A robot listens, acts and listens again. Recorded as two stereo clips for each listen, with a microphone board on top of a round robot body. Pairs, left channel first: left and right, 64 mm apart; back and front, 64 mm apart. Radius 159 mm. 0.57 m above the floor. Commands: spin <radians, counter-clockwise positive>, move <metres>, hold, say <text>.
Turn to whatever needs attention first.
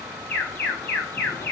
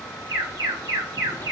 spin 0.44
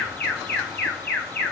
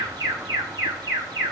spin 0.44
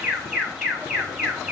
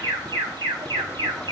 spin -0.17
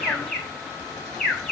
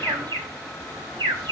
say Found it: an alarm, straight ahead, over 4 m away.